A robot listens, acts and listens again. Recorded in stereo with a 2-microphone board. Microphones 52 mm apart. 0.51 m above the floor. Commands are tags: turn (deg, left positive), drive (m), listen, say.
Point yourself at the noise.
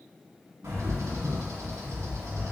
<turn deg="-75"/>
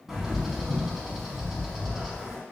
<say>Found it: a bird, straight ahead.</say>